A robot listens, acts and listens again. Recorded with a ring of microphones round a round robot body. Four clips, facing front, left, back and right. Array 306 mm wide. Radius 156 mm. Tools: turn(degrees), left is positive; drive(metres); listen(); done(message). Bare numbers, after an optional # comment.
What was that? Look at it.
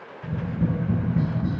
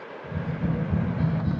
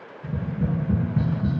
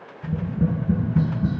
# The tapping: 80° right.
turn(-80)
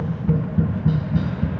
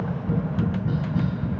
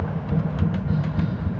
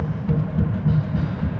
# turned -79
done("Found it: tapping, straight ahead.")